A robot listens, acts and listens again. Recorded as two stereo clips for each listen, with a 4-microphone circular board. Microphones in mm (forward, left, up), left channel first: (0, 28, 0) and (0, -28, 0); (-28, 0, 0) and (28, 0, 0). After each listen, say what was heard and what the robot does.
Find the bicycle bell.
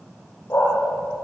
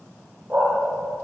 Keep listening.
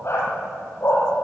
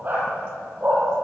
Keep listening.
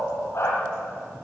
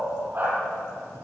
I can't make out a bicycle bell, only a dog barking.